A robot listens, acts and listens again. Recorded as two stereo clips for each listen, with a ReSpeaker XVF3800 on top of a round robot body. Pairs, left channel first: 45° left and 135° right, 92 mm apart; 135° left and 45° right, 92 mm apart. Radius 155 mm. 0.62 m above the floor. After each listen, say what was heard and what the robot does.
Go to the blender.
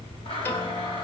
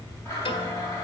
The blender: 75° left. Turn 75° left.
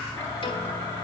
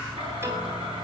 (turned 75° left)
The blender is now 20° right. Turn 20° right.
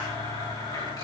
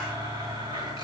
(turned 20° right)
Drive 1.0 m forward.
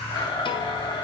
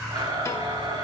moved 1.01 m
Drive 1.0 m forward.
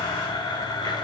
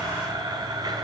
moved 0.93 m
Drive 1.0 m forward.
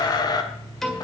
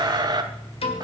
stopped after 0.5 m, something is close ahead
Arrived at the blender, straight ahead.